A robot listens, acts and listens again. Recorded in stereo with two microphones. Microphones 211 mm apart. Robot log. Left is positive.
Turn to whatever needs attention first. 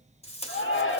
note: The shout: about 70° left or 110° left.
cmd yaw +70
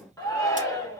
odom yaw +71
note: So it is at 15° left.
cmd yaw +15
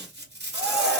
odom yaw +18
end: Found it: a shout, straight ahead.